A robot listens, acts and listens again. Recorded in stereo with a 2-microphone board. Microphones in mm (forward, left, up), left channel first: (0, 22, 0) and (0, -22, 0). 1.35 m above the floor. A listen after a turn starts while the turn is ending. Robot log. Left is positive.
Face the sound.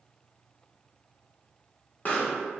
note: The pop: about 40° left or 140° left.
cmd yaw +40
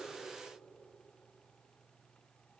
cmd idle
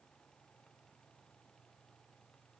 end: I heard a pop, but can't make it out now. It was about straight ahead or 100° left.